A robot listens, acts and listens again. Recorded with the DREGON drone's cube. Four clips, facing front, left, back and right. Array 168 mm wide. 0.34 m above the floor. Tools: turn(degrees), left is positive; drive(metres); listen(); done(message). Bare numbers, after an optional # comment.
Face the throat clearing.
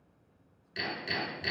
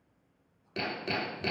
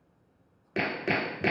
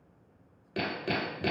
listen()
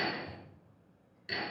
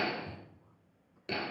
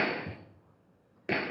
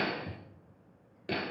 listen()
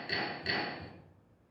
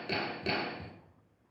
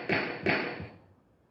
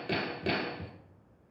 done("I can't make out throat clearing to turn to.")